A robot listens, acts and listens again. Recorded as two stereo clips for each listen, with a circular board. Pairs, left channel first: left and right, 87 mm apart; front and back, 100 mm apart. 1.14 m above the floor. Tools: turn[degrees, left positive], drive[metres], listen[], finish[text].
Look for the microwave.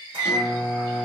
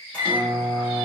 Thought: The microwave: 80° right.
Action: turn[-80]
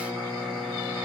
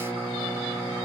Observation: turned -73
Action: finish[Found it: a microwave, straight ahead.]